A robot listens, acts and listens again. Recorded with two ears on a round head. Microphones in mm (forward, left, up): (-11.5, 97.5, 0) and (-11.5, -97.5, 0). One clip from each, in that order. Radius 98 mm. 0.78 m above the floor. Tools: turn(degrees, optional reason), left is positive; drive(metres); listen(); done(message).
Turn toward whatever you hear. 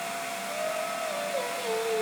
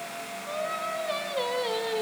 turn(degrees=-35, reason="The singing: about 35° right or 145° right.")
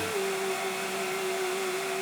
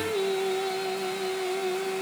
turn(degrees=-125, reason="So it is at 125° right.")
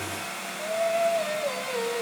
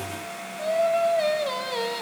turn(degrees=-40, reason="The singing is now 40° right.")
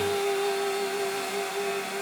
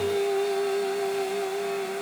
turn(degrees=15, reason="The singing is now 15° left.")
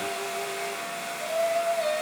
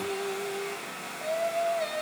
done("Found it: singing, straight ahead, 2 to 4 m away.")